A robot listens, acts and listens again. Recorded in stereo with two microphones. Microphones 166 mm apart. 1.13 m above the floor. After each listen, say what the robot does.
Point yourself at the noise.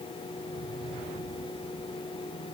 Keep listening.
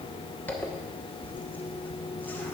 Turn 30° left.
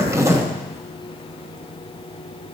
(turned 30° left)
Turn 20° right.
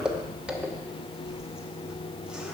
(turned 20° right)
Facing the zipper.